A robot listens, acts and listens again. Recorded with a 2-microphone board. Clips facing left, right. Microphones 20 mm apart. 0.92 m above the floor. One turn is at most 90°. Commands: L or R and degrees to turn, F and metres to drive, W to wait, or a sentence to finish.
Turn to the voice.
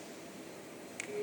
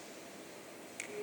W
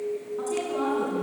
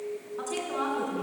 R20
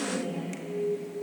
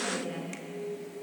R35
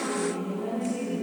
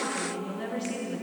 R90
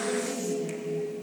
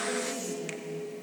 R20
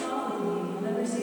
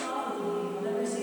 Found it: a woman speaking, straight ahead.